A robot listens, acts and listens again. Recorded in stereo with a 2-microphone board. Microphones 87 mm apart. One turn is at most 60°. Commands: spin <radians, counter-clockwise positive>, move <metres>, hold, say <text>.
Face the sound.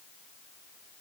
hold
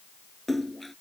spin 0.52
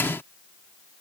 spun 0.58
hold
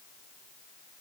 say I heard a splash, but can't make it out now. It was about 30° right or 145° left.